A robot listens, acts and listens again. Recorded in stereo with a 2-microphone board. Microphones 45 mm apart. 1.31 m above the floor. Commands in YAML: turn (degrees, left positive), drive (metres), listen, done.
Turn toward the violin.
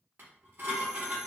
listen: true
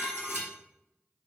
listen: true
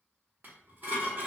done: "I can't make out a violin, only dishes clattering."